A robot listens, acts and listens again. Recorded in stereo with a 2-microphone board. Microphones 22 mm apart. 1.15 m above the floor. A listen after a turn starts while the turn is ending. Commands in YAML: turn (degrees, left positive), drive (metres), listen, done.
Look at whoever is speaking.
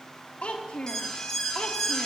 turn: 70
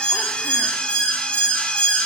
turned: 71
listen: true
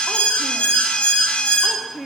done: "Facing the child speaking."